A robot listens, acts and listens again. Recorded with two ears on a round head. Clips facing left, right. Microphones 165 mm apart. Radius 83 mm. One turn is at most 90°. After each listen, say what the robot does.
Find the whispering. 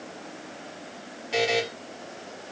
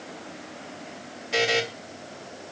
Keep listening.
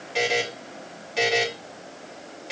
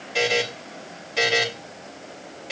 Keep listening.
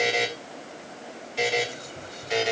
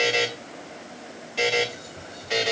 Turn 55° left.
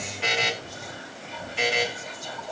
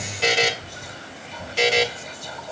Facing the whispering.